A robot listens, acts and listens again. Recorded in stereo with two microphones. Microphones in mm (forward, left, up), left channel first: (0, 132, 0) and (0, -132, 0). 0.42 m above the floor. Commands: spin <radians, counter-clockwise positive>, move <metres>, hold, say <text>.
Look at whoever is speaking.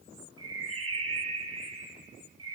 hold
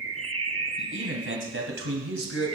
spin -0.87
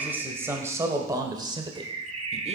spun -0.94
spin -0.44
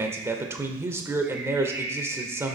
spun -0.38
spin -0.17
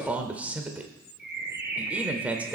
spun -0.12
say Found it: a man speaking, straight ahead, 1 to 2 m away.